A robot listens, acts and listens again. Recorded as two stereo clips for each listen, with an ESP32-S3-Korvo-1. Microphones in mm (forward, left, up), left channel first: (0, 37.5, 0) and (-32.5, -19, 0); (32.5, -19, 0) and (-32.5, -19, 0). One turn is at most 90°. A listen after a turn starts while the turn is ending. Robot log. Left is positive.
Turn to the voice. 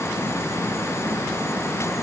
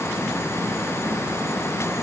cmd idle
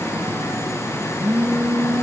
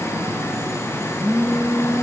cmd idle
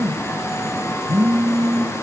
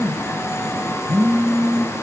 end: I can't make out anyone speaking to turn to.